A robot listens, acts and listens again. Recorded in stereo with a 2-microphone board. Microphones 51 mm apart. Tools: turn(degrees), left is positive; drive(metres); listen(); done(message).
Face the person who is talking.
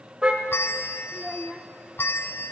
turn(degrees=30)
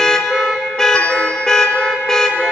listen()
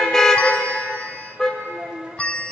turn(degrees=-30)
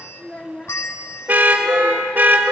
turn(degrees=20)
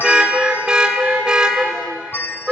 listen()
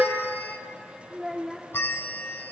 done("Found it: a child speaking, straight ahead.")